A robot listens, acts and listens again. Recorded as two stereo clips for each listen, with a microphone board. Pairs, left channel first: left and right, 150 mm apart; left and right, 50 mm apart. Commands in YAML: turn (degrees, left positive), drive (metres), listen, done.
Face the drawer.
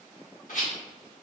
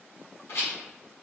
listen: true
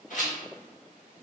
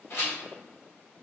listen: true
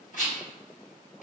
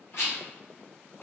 done: "I can't make out a drawer, only a rattle."